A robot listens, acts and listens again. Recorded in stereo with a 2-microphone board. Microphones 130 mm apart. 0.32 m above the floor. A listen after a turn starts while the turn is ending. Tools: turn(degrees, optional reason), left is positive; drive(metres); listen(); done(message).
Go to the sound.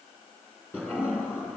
turn(degrees=30)
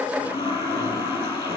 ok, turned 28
turn(degrees=140, reason="So it is at 140° left.")
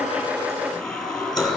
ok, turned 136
drive(metres=1.0)
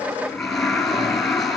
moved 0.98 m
drive(metres=1.0)
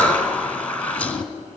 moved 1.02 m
turn(degrees=10, reason="The toilet flushing is now 10° left.")
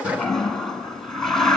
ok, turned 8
drive(metres=1.0)
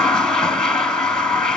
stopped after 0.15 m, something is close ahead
done("I am next to the toilet flushing.")